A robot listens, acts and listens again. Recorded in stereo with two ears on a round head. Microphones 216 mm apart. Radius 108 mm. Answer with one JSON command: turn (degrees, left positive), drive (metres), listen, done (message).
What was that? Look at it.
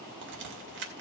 {"turn": -50}
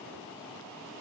{"listen": true}
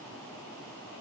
{"done": "I heard a crack, but can't make it out now. It was about straight ahead or 80° right."}